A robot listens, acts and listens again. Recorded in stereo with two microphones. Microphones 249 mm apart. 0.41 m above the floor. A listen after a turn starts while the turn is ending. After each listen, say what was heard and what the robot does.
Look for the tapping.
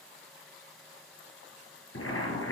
Keep listening.
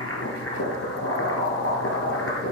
Keep listening.
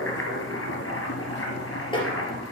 The tapping: about 20° left or 160° left. Turn 20° left.
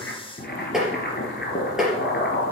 Found it: tapping, straight ahead.